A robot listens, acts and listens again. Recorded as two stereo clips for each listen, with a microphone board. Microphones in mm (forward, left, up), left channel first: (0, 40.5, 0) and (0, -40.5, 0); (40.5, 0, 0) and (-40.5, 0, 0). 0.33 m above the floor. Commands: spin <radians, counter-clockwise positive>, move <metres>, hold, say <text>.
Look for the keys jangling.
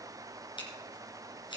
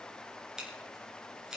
hold
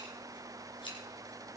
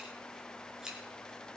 hold
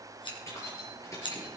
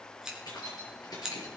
spin 0.70
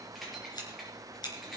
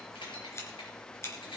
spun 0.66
say Facing the keys jangling, over 4 m away.